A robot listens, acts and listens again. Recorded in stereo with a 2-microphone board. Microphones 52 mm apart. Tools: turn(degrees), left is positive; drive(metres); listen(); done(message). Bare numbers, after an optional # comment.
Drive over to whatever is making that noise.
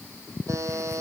turn(-90)
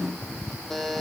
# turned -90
drive(1.0)
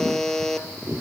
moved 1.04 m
# The buzzer is now 10° left.
turn(10)
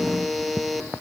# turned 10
drive(1.0)
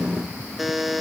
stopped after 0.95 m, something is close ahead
done("Arrived at the buzzer, straight ahead.")